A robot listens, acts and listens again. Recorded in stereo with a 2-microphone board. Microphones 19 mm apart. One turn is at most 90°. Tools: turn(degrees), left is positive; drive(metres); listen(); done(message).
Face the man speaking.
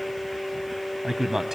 turn(degrees=-25)
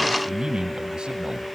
turn(degrees=-90)
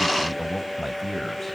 done("Facing the man speaking.")